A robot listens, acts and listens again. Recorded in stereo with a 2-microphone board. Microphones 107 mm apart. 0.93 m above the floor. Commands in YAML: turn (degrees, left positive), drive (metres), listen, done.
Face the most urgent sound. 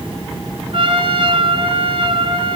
listen: true
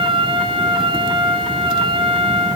listen: true
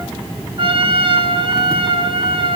done: "I can't make out anything urgent, only a trumpet."